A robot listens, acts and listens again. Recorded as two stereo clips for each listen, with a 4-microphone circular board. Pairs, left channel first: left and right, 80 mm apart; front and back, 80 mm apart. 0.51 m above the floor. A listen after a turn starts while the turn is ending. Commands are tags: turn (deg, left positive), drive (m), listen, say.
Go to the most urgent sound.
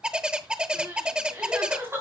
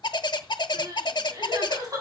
<turn deg="-145"/>
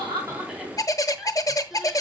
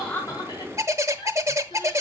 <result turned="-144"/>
<drive m="1.0"/>
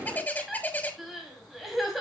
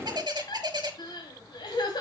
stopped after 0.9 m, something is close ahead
<say>Something is in my way. I am facing the crying but have not reached it.</say>